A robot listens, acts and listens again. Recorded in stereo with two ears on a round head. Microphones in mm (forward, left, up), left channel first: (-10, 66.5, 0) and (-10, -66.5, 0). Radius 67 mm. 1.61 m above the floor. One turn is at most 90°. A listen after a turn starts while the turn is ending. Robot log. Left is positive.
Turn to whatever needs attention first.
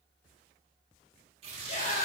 note: The scream: about 45° left or 135° left.
cmd yaw +45
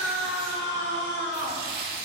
note: So it is at 90° left.
cmd yaw +90
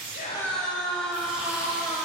end: Facing the scream.